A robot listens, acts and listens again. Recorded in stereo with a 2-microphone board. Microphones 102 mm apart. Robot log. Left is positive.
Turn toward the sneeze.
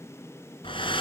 cmd idle
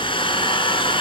cmd idle
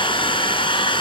end: I can't make out a sneeze, only a hair dryer.